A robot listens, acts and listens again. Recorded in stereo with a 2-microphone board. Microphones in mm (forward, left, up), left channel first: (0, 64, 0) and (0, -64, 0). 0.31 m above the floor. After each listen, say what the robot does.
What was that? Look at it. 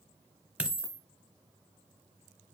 Turn 30° right.
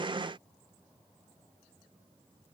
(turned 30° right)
Keep listening.
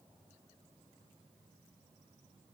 I heard a dropped coin, but can't make it out now. It was about 20° left or 140° right.